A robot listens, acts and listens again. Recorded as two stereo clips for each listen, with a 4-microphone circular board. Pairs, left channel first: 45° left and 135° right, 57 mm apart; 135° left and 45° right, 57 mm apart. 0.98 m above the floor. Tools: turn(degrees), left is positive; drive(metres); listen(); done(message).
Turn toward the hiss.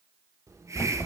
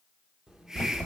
turn(degrees=-125)
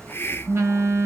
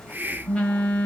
done("Facing the hiss, under 1 m away.")